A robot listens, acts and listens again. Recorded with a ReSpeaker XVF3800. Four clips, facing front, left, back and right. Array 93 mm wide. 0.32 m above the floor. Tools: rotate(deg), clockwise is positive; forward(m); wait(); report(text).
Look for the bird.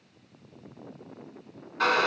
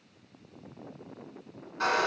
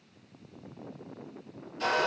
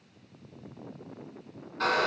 wait()
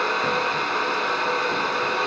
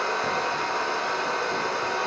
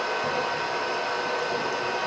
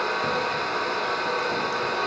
wait()
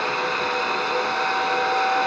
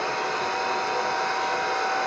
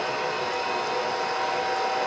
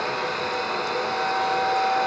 report("I can't make out a bird to turn to.")